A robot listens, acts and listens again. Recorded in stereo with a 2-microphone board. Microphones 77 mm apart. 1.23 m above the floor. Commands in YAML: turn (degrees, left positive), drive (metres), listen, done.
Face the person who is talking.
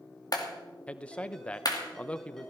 turn: 30
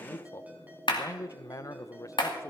turn: 135
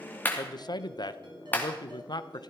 turn: 65
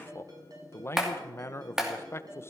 turn: 35
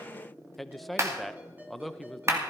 done: "Facing the man speaking."